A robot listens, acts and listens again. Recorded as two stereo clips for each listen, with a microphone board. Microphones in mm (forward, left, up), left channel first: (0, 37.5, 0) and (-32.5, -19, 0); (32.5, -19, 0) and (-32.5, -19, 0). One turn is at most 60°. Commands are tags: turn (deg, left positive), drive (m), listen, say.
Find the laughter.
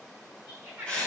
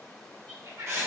<turn deg="60"/>
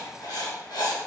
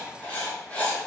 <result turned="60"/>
<turn deg="60"/>
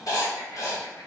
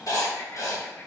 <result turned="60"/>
<turn deg="55"/>
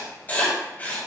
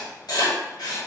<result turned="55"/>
<say>I heard laughter from this way, but can't make it out now.</say>